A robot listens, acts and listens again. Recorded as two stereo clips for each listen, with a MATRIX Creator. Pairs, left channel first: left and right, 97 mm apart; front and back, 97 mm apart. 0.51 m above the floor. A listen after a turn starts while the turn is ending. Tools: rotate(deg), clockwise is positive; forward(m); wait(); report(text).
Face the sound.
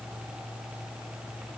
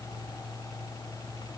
wait()
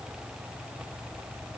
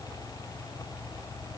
wait()
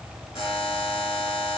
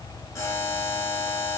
rotate(-60)
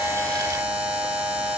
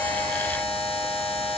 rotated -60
rotate(15)
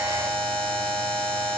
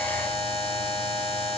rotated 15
report("Facing the buzzer.")